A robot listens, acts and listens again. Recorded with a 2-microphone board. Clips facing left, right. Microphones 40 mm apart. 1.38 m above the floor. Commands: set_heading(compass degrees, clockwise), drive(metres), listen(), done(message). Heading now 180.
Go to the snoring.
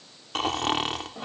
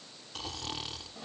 set_heading(90)
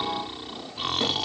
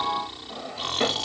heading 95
set_heading(85)
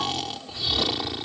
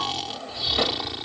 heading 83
drive(1.0)
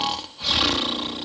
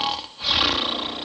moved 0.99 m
drive(1.0)
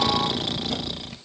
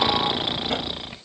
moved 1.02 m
set_heading(108)
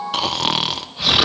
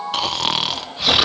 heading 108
drive(1.0)
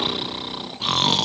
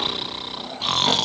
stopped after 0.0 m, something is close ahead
done("I am next to the snoring.")